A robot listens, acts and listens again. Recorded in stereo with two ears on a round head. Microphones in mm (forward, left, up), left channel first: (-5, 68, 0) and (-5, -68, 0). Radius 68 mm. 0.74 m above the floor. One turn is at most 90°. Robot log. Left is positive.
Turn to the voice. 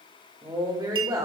note: The woman speaking: about 25° right or 155° right.
cmd yaw -25
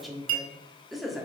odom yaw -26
end: Found it: a woman speaking, straight ahead.